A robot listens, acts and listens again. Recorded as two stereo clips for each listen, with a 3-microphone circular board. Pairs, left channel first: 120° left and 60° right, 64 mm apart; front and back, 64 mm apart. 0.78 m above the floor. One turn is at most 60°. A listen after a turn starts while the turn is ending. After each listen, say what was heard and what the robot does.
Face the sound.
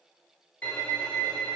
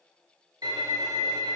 The violin: 170° right. Turn 60° right.
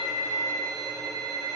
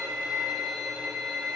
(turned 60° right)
The violin is now 100° right. Turn 60° right.
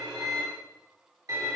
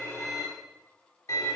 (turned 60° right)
The violin is now 35° right. Turn 35° right.
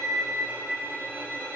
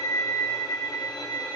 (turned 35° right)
Found it: a violin, straight ahead.